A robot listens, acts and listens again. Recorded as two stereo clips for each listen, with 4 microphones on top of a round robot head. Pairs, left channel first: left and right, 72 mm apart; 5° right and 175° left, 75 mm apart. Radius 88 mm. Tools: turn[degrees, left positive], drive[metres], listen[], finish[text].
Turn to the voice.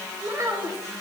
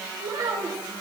Thought: The child speaking: 140° right.
Action: turn[-140]
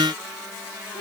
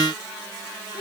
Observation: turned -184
Thought: The child speaking is now 45° left.
Action: turn[45]
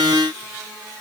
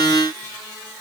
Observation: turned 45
Action: listen[]
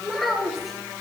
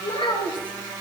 Action: finish[Found it: a child speaking, straight ahead.]